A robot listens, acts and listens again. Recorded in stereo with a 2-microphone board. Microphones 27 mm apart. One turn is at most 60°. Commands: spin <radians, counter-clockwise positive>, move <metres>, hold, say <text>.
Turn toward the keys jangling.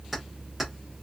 spin -0.52
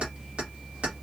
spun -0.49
spin -1.05
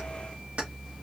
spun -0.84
spin -0.96
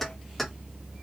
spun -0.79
spin 0.17
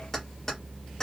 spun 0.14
spin 0.35
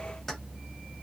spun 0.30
hold
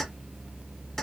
spin 0.17
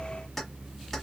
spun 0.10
say Found it: keys jangling, straight ahead, 1 to 2 m away.